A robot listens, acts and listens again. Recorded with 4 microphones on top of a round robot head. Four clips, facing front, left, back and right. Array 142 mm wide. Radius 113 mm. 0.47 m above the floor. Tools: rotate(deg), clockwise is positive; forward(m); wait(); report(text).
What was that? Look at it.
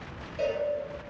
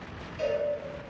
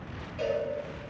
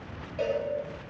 rotate(75)
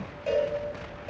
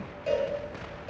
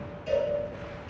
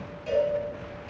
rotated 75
rotate(-20)
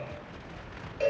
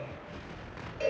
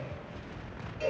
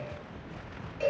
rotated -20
report("Facing the cowbell.")